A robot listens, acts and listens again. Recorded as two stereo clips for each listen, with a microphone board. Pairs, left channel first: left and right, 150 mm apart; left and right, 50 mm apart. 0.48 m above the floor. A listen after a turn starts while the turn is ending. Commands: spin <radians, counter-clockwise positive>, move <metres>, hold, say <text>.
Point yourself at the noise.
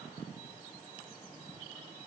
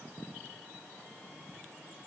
hold
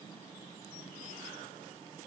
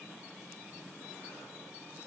hold
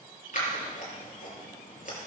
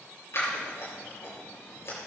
spin 1.05
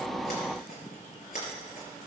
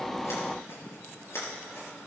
spin 1.13
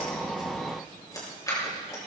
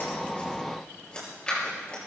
spin 0.44
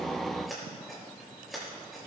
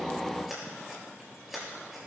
say Facing the scissors.